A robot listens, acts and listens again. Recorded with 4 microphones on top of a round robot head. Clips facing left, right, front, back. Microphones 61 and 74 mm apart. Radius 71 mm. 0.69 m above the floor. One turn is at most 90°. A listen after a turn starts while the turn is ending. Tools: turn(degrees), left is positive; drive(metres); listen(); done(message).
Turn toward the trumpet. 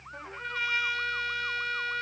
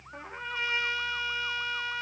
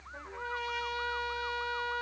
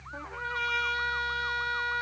turn(degrees=-90)
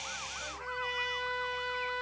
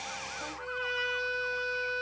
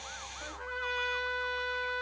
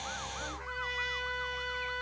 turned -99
turn(degrees=-55)
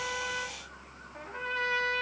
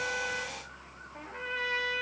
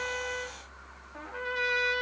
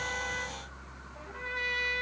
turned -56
done("Facing the trumpet.")